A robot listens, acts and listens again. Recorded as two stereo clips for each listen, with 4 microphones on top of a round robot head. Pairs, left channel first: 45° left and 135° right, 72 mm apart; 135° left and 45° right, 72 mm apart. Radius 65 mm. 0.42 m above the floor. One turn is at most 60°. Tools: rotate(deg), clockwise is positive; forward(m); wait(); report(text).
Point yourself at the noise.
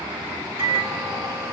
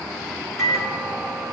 rotate(60)
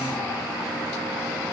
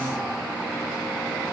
rotate(60)
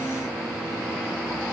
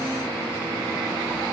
rotate(20)
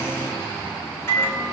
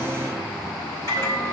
rotate(10)
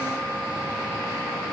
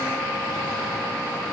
wait()
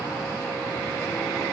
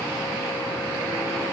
wait()
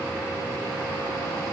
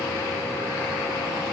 report("Facing where the microwave came from. I can't hear it now.")